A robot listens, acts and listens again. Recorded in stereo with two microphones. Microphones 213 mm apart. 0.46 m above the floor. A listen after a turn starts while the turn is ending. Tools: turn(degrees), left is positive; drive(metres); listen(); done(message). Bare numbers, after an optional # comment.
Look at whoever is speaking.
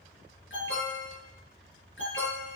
listen()
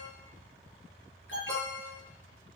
listen()
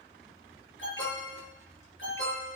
done("I can't make out anyone speaking to turn to.")